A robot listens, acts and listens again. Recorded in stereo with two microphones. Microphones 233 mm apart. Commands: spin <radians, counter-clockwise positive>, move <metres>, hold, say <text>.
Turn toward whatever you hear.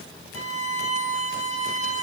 spin 1.31
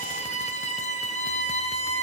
spin 0.52
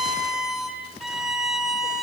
say Found it: a violin, straight ahead.